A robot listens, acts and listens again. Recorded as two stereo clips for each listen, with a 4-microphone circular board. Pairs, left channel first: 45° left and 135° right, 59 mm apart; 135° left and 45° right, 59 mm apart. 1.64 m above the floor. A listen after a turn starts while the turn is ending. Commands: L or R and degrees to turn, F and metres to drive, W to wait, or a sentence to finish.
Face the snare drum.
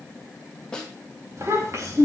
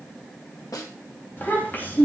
L120
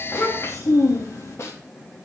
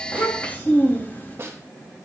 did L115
Facing the snare drum, 2 to 4 m away.